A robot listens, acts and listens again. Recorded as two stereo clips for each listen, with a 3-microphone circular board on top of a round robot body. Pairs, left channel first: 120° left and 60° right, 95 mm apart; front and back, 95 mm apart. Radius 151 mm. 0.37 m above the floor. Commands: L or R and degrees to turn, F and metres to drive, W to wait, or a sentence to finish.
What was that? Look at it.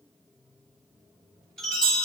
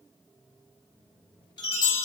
L40
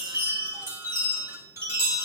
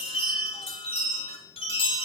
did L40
Facing the chime.